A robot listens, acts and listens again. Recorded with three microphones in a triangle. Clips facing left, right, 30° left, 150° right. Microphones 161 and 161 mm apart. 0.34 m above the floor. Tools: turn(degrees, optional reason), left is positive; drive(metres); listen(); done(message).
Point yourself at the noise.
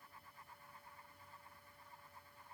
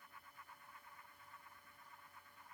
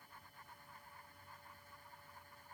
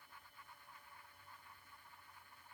listen()
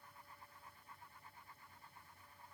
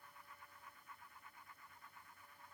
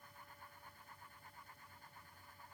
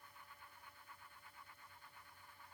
listen()
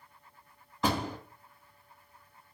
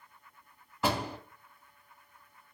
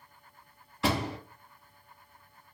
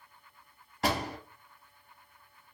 turn(degrees=-170, reason="The door slam: 170° right.")
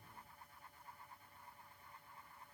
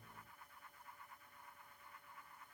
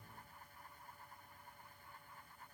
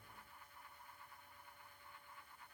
done("I heard a door slam from this way, but can't make it out now.")